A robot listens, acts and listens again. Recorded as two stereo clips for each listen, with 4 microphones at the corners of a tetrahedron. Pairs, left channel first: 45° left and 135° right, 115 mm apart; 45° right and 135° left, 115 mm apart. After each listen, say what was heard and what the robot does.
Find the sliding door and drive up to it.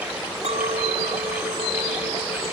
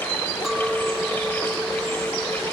Keep listening.
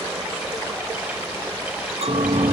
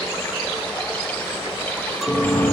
The sliding door: 95° right. Turn 95° right.
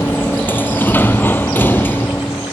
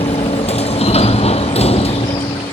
The sliding door is now 30° right. Turn 30° right.
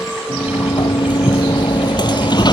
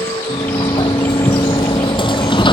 Drive 1.0 m forward.
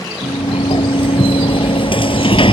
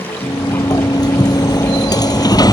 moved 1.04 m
Drive 1.0 m forward.
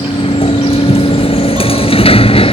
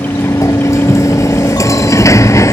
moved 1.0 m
The sliding door is now 15° left. Turn 15° left.
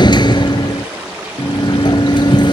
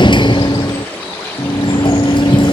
Drive 1.0 m forward.
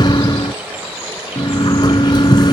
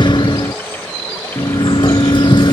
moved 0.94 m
Drive 1.0 m forward.
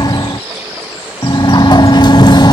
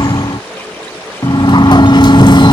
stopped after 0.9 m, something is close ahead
I am next to the sliding door.